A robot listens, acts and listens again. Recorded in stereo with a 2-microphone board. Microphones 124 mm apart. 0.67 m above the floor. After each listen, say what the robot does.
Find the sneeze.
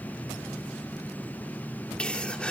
Turn 30° left.
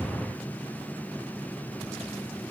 Keep listening.
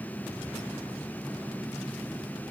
I heard a sneeze, but can't make it out now. It was about 20° right or 140° left.